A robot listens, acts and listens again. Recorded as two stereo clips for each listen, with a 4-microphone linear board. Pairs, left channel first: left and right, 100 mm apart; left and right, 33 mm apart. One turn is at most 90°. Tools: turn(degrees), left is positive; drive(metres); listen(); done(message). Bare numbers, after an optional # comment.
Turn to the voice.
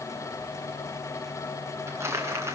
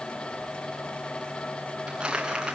listen()
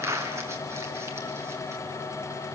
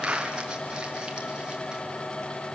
listen()
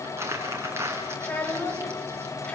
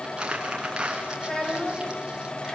turn(30)
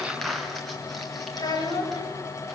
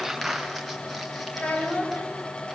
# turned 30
# So it is at 140° left.
turn(90)
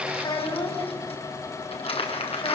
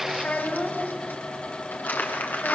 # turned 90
# The child speaking is now 50° left.
turn(50)
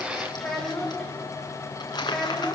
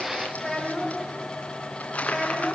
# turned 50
done("Facing the child speaking.")